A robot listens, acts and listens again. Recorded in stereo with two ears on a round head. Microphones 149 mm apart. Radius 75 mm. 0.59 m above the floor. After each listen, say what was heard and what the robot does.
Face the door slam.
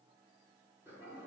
Keep listening.
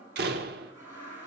The door slam: about 65° right or 115° right. Turn 65° right.
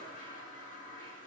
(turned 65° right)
Keep listening.
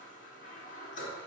I heard a door slam, but can't make it out now. It was about straight ahead or 50° right.